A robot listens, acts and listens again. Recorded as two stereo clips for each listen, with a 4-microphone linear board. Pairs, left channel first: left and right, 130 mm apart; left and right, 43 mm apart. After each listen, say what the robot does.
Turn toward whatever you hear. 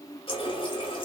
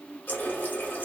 Turn 45° left.
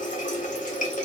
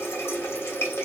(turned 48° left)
Turn 85° left.
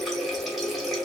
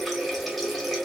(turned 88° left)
Facing the running tap, under 1 m away.